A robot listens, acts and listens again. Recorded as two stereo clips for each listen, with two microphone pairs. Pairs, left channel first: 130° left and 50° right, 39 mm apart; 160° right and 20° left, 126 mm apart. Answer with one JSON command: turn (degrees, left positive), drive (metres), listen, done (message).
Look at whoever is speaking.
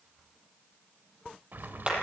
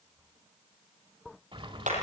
{"listen": true}
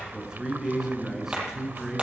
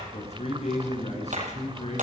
{"turn": -125}
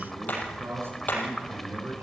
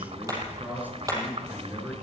{"turn": -55}
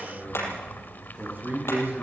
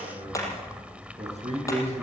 {"done": "Facing the man speaking."}